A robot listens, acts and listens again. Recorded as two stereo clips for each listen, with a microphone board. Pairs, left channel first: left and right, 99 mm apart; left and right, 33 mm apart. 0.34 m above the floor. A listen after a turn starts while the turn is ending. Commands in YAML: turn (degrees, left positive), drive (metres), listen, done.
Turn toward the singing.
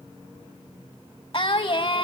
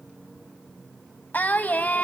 turn: 65
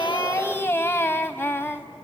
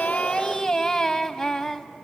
turn: 25
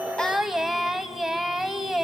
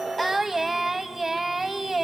done: "Found it: singing, straight ahead."